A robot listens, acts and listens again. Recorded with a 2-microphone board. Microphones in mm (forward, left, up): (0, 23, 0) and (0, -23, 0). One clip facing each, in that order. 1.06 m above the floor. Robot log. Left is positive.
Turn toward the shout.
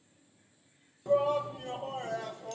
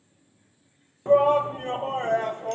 note: The shout: about 40° right or 140° right.
cmd yaw -40
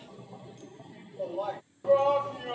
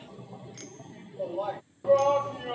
end: Facing the shout.